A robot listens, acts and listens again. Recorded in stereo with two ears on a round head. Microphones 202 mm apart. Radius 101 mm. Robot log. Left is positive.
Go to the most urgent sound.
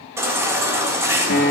cmd yaw -30
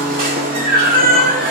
note: So it is at 135° right.
cmd yaw -135
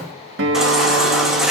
cmd fwd 1.0
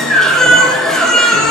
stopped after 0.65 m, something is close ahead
end: Something is in my way. I am facing the baby crying but have not reached it.